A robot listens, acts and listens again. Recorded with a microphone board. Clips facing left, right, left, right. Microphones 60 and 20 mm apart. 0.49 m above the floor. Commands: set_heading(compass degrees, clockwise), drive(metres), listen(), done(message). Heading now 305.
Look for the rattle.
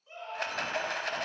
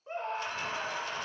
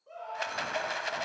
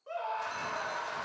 set_heading(230)
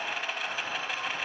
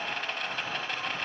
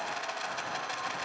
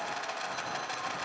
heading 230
done("Found it: a rattle, straight ahead.")